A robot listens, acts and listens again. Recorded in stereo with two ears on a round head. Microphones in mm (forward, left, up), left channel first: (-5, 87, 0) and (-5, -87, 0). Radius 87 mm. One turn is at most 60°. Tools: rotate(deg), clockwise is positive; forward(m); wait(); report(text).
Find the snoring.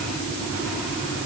wait()
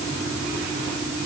wait()
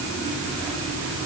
report("I can't make out snoring to turn to.")